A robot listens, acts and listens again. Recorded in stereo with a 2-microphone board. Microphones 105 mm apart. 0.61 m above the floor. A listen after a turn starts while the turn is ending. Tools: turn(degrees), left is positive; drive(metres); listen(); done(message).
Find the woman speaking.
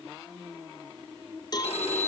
listen()
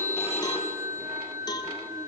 listen()
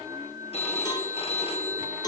done("I can't make out a woman speaking, only a phone ringing and a cowbell.")